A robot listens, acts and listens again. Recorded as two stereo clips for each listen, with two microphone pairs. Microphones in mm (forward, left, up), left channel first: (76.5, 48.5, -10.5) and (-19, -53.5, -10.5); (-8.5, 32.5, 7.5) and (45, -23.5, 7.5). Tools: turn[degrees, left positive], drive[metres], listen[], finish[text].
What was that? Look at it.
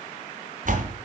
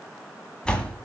Thought: The door slam: 145° right.
Action: turn[-145]
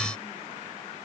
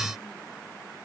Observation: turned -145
Action: finish[I heard a door slam from this way, but can't make it out now.]